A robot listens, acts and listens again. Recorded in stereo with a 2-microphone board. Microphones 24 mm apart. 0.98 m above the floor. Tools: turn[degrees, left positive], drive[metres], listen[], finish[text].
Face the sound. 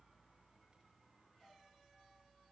Action: listen[]
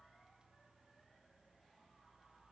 Action: listen[]
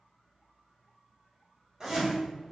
Thought: The zipper: about 30° right or 150° right.
Action: turn[-30]
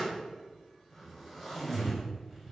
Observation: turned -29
Action: finish[Facing the zipper, 1 to 2 m away.]